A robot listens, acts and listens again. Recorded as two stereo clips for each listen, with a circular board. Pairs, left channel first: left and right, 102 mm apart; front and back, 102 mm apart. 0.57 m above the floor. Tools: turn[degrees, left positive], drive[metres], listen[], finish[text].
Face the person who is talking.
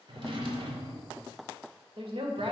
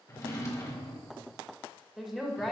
Thought: The woman speaking: 95° right.
Action: turn[-95]
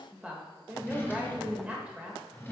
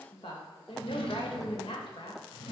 Thought: The woman speaking is now 15° right.
Action: turn[-15]
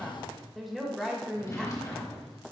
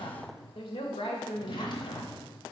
Action: finish[Found it: a woman speaking, straight ahead, 1 to 2 m away.]